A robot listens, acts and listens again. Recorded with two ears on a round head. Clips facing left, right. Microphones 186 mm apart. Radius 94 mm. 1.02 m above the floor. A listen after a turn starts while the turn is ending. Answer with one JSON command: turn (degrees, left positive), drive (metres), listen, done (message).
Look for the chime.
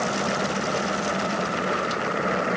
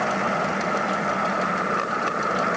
{"listen": true}
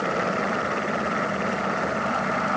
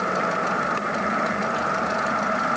{"listen": true}
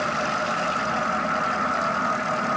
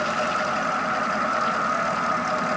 {"done": "I can't make out a chime."}